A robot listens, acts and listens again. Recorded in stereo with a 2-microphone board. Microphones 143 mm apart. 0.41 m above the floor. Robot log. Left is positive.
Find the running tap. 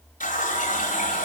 note: The running tap: about 65° left or 115° left.
cmd yaw +65
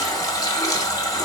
note: So it is at 30° left.
cmd yaw +30
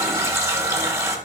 note: The running tap is now 20° right.
cmd yaw -20
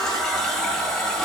end: Facing the running tap.